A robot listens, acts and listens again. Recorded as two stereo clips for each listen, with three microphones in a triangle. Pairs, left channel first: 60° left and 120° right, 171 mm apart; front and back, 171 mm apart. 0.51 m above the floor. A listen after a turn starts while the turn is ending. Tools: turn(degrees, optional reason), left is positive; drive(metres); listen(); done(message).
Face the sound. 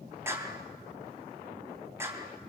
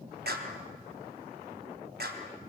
turn(degrees=165, reason="The clap: 165° left.")
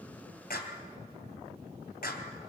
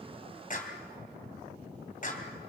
turn(degrees=35, reason="The clap is now 35° left.")
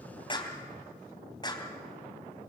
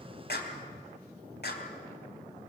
done("Found it: a clap, straight ahead.")